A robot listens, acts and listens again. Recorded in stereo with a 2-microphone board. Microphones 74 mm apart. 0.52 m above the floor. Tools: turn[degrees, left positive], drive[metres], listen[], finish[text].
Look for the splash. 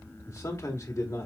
Action: listen[]
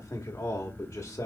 Action: listen[]
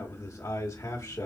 Action: finish[I can't make out a splash to turn to.]